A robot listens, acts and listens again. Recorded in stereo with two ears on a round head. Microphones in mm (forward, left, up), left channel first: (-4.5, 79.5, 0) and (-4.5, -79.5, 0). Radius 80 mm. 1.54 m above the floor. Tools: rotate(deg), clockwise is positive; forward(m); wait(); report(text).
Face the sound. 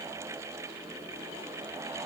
wait()
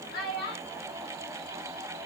rotate(-60)
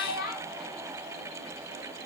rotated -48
rotate(-50)
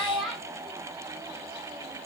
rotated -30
report("Found it: a child speaking, straight ahead.")